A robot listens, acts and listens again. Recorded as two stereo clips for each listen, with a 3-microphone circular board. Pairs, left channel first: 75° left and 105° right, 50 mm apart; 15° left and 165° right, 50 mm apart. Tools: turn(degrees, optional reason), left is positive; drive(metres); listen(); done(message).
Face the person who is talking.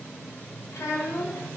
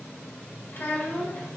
turn(degrees=65, reason="The child speaking: 65° left.")
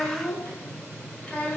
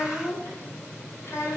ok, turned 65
turn(degrees=15, reason="The child speaking is now 15° left.")
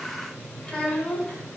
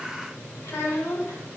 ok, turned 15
done("Found it: a child speaking, straight ahead, 1 to 2 m away.")